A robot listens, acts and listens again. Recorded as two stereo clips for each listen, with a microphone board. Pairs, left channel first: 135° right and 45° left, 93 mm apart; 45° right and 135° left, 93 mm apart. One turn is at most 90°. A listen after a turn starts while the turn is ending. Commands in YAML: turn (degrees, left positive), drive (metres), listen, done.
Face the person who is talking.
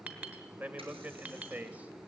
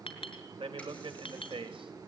turn: 90
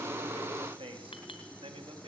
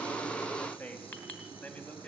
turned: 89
turn: 30
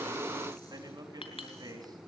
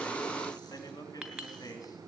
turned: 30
done: "Facing the man speaking, over 4 m away."